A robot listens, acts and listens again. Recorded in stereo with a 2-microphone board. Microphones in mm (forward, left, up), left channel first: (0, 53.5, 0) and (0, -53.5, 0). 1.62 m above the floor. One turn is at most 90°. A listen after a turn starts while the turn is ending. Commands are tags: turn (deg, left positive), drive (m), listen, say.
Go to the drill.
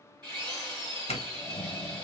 <turn deg="-45"/>
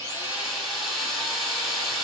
<drive m="1.0"/>
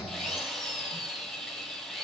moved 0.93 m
<drive m="1.0"/>
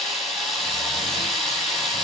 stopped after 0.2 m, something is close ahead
<say>I am next to the drill.</say>